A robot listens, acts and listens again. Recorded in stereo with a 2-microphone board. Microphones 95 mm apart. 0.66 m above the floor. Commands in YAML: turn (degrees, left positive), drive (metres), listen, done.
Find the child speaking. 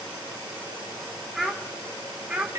turn: -30
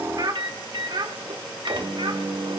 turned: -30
turn: -120
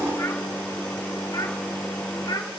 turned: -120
turn: 45
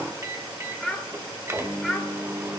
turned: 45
done: "Facing the child speaking."